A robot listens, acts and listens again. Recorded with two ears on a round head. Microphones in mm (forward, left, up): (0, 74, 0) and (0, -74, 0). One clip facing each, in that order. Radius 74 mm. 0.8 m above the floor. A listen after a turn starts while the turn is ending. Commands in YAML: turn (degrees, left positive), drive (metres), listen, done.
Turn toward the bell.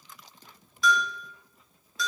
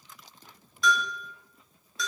turn: 30
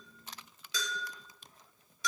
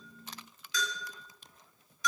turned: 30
turn: 150
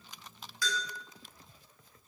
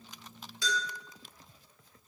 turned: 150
turn: -25
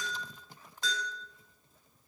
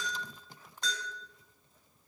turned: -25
done: "Facing the bell."